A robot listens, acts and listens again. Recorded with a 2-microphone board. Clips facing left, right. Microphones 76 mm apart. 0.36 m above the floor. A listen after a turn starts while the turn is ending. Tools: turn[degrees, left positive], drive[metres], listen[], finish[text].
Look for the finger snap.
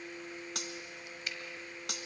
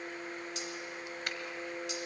Thought: The finger snap: about 55° right or 125° right.
Action: turn[-55]
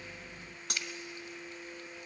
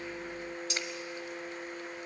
Action: listen[]
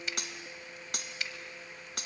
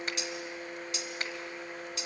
Thought: So it is at 55° right.
Action: turn[-55]
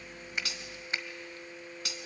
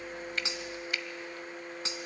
Thought: The finger snap is now 30° left.
Action: turn[30]
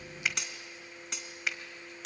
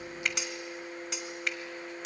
Action: finish[Facing the finger snap, 1 to 2 m away.]